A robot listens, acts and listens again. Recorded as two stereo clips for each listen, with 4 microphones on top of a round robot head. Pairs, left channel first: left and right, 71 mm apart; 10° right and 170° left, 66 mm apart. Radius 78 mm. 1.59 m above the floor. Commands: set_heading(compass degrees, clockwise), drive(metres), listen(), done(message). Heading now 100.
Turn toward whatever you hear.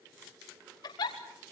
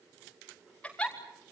set_heading(35)
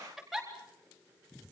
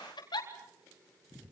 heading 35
done("Found it: a giggle, straight ahead, over 4 m away.")